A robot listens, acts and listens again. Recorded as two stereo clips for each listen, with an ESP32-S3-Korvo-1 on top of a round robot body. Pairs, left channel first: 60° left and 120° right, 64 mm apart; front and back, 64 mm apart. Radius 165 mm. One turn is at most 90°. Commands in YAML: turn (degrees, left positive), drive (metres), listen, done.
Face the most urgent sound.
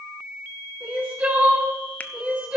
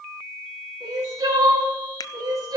turn: 90
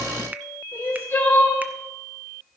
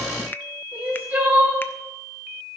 turn: 90
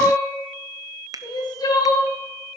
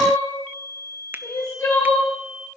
turn: 50
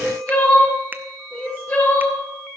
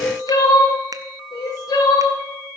turn: -10
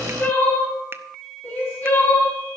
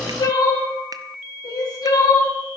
done: "Facing the crying."